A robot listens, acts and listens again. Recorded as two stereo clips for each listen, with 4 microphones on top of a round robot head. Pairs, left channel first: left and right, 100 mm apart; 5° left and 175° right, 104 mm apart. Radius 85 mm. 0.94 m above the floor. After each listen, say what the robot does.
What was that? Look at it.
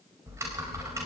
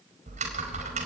Turn 160° right.
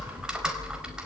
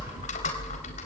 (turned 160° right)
Turn 10° right.
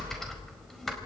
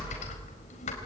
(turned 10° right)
Facing the typing on a keyboard.